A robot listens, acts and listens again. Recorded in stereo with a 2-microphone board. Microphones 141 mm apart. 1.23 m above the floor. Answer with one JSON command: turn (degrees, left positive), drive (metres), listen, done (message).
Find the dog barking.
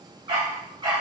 {"turn": -30}
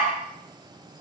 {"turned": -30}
{"done": "Facing the dog barking."}